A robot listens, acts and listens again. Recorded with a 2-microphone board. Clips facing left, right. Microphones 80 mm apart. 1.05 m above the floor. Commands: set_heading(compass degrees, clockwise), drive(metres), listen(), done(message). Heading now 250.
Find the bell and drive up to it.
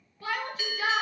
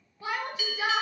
set_heading(210)
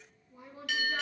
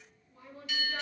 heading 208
set_heading(108)
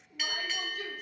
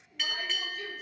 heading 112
drive(1.0)
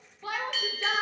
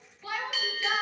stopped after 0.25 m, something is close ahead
done("Something is in my way. I am facing the bell but have not reached it.")